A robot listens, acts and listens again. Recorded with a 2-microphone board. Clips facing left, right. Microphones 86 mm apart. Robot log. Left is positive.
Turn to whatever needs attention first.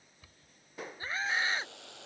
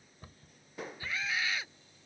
note: The scream: about 35° left or 145° left.
cmd yaw +35
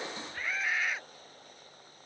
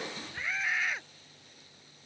end: Facing the scream.